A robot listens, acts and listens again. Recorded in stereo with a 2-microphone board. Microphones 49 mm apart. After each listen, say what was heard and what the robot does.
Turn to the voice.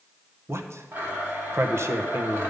The man speaking: about 60° right or 120° right. Turn 60° right.
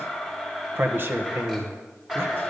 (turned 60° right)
So it is at 55° right. Turn 55° right.
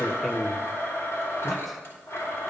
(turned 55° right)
Found it: a man speaking, straight ahead, 1 to 2 m away.